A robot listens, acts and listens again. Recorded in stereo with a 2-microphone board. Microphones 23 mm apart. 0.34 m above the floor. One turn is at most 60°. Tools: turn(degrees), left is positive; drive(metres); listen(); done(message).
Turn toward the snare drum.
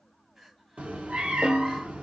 turn(degrees=-55)
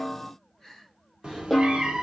done("Facing the snare drum.")